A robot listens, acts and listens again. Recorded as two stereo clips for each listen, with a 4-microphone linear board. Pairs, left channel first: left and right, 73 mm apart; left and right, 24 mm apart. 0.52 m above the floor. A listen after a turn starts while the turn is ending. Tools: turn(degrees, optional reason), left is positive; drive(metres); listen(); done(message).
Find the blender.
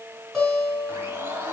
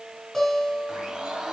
turn(degrees=-35, reason="The blender: about 35° right or 145° right.")
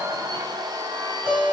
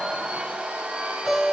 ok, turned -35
turn(degrees=-115, reason="So it is at 115° right.")
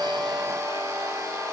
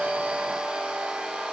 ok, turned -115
turn(degrees=-45, reason="The blender is now 45° right.")
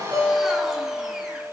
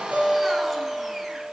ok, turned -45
listen()
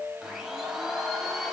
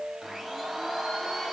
done("Found it: a blender, straight ahead.")